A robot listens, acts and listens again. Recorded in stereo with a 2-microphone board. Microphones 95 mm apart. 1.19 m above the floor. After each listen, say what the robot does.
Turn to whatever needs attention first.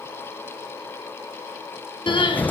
Turn 65° left.
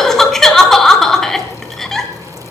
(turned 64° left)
Found it: crying, straight ahead, 2 to 4 m away.